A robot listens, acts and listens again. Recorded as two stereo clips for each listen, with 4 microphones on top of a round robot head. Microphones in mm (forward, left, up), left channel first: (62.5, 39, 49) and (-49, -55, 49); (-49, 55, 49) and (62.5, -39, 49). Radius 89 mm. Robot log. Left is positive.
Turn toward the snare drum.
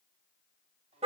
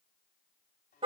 cmd idle
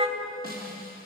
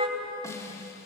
note: The snare drum: 150° right.
cmd yaw -150
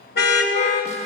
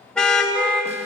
cmd idle
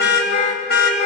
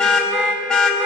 cmd idle
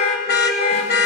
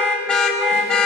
end: Facing where the snare drum came from. I can't hear it now.